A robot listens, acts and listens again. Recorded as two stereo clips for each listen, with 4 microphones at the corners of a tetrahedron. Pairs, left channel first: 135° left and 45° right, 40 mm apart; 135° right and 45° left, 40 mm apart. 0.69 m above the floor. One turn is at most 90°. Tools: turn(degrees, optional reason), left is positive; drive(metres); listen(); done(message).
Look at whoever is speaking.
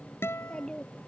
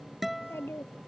turn(degrees=-90, reason="The child speaking: 150° right.")
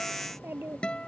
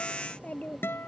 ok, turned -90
turn(degrees=-80, reason="The child speaking is now 80° right.")
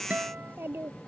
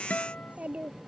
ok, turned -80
turn(degrees=-15, reason="The child speaking is now 15° right.")
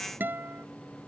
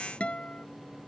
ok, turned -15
listen()
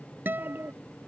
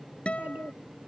done("Facing the child speaking.")